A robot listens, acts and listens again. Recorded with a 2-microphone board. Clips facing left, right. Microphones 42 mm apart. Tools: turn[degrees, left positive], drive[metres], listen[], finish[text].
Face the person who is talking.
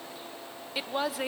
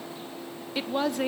Action: turn[30]
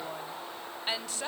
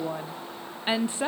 Thought: So it is at 25° right.
Action: turn[-25]
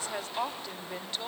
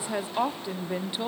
Thought: The woman speaking is now 15° right.
Action: turn[-15]
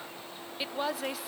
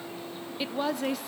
Action: finish[Facing the woman speaking.]